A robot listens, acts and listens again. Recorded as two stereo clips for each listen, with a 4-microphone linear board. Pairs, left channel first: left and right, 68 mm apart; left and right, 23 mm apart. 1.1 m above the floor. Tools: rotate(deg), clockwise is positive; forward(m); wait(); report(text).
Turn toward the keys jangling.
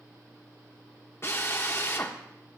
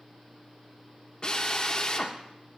wait()
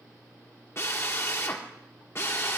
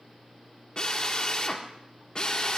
wait()
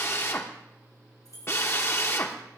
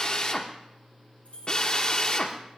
rotate(-60)
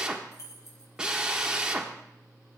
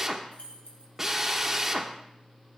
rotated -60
rotate(-60)
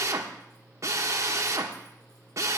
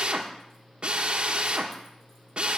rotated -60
wait()
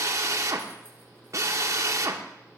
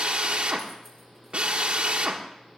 wait()
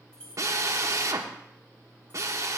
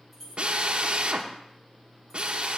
rotate(-10)
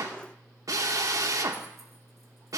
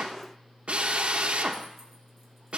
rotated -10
wait()
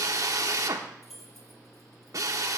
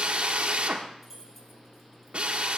report("Facing the keys jangling.")